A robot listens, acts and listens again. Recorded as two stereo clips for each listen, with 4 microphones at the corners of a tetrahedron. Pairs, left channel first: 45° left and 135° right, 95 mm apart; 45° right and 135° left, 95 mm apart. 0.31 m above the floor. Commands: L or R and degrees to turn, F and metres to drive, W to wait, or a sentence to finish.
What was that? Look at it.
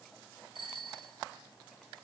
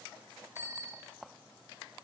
R165
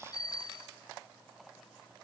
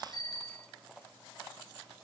Found it: a bicycle bell, straight ahead.